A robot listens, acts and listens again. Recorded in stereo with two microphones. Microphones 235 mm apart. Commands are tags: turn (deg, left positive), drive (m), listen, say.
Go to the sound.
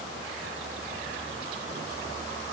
<listen/>
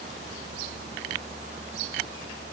<listen/>
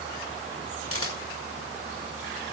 <turn deg="70"/>
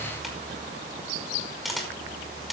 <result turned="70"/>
<drive m="1.0"/>
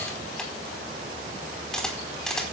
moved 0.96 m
<drive m="1.0"/>
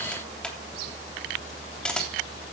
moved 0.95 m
<drive m="1.0"/>
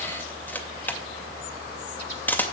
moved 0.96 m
<turn deg="10"/>
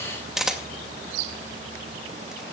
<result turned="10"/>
<drive m="1.0"/>
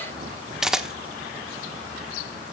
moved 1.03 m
<drive m="1.0"/>
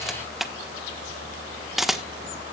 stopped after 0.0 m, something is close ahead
<say>Arrived at the camera shutter, straight ahead.</say>